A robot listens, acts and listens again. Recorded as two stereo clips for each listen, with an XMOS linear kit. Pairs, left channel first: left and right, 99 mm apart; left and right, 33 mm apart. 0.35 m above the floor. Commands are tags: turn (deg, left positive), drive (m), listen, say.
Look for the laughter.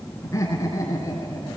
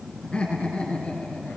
<turn deg="35"/>
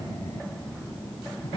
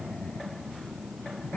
<turn deg="110"/>
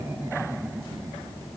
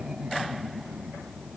<turn deg="-25"/>
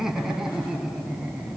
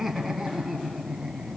<turn deg="-10"/>
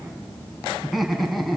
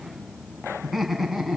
<say>Found it: laughter, straight ahead, 2 to 4 m away.</say>